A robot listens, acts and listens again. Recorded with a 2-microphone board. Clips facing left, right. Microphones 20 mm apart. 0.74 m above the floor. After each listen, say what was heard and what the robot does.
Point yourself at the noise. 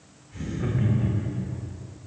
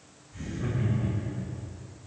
The laughter: about 70° left or 110° left. Turn 70° left.
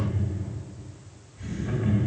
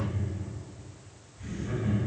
So it is at 40° left. Turn 40° left.
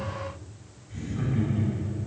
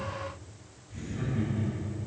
The laughter is now 10° left. Turn 10° left.
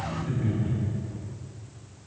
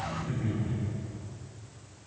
Facing the laughter.